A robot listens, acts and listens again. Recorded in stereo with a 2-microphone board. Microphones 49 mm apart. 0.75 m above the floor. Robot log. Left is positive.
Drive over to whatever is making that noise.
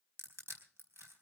note: The crushing: about 55° right or 125° right.
cmd yaw -55
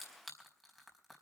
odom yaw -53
cmd fwd 1.0
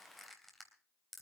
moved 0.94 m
cmd fwd 1.0
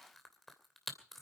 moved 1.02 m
cmd fwd 1.0
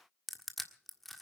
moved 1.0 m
cmd fwd 1.0
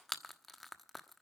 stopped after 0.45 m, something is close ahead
end: Arrived at the crushing, straight ahead.